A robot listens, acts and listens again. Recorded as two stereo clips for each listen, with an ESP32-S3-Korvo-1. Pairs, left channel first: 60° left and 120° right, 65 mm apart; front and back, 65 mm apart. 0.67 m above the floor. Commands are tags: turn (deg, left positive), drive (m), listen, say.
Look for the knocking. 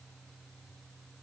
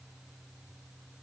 <listen/>
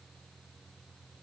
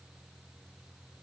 <listen/>
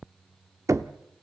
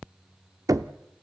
<turn deg="-155"/>
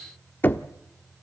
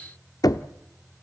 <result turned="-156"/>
<say>Facing the knocking, under 1 m away.</say>